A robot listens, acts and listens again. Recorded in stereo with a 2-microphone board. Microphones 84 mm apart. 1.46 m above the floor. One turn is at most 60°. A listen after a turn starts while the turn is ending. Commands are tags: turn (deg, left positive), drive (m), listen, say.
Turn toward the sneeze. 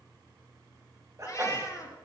<turn deg="-35"/>
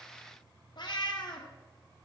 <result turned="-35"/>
<listen/>
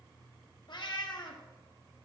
<say>I heard a sneeze, but can't make it out now. It was about straight ahead or 110° right.</say>